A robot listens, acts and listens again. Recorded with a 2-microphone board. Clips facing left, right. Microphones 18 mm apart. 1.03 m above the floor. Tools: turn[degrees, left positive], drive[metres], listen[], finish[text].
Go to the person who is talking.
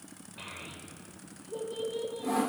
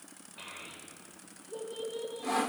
Action: turn[30]
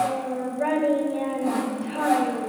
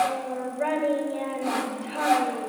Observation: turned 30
Thought: So it is at 25° right.
Action: turn[-25]
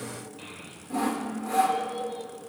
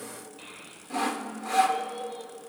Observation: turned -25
Action: drive[1.0]
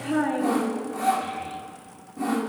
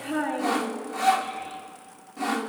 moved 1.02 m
Action: drive[1.0]
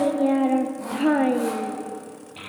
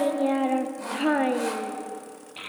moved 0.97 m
Thought: The child speaking is now 15° right.
Action: turn[-15]
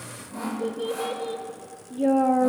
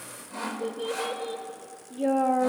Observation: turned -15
Action: drive[1.0]
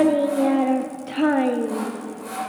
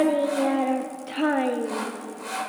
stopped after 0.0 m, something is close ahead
Action: finish[I am next to the child speaking.]